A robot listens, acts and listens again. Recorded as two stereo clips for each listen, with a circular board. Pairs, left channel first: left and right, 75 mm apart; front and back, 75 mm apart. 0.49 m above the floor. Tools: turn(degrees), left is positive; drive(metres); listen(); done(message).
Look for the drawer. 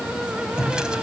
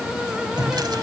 turn(degrees=-170)
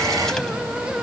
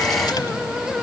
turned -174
listen()
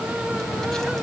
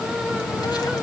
listen()
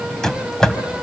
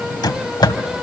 turn(degrees=10)
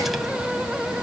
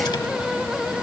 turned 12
listen()
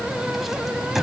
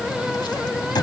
done("Facing the drawer.")